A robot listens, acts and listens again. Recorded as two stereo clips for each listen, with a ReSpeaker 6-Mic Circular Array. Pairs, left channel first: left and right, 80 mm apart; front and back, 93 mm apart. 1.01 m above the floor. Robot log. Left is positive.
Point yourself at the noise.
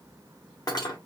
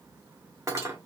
note: The cutlery clinking: 125° left.
cmd yaw +125
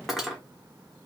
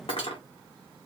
end: Found it: cutlery clinking, straight ahead, under 1 m away.